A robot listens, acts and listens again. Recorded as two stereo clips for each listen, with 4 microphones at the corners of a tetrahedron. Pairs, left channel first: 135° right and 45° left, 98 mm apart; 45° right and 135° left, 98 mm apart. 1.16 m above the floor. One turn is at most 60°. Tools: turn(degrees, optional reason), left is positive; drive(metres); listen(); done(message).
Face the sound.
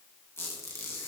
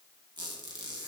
turn(degrees=60, reason="The squeak: 165° left.")
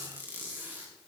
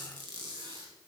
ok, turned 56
turn(degrees=60, reason="The squeak is now 110° left.")
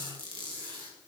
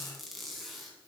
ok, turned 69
turn(degrees=45, reason="The squeak is now 45° left.")
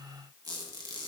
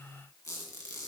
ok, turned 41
done("Found it: a squeak, straight ahead.")